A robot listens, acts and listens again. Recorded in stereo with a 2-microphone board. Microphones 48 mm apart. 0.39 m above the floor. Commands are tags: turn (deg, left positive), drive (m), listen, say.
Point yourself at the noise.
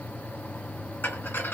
<turn deg="50"/>
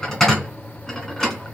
<turn deg="15"/>
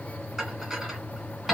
<say>Facing the dishes clattering.</say>